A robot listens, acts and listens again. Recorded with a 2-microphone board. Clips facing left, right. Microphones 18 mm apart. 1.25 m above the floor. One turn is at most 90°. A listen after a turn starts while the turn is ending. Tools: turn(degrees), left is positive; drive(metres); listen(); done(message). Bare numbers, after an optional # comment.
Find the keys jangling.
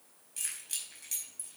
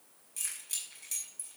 turn(30)
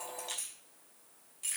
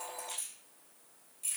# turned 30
# So it is at 145° left.
turn(90)
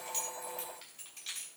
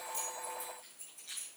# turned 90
# The keys jangling is now 80° left.
turn(80)
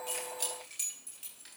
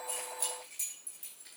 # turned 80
# The keys jangling is now 25° left.
turn(25)
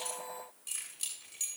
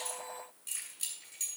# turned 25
done("Facing the keys jangling, over 4 m away.")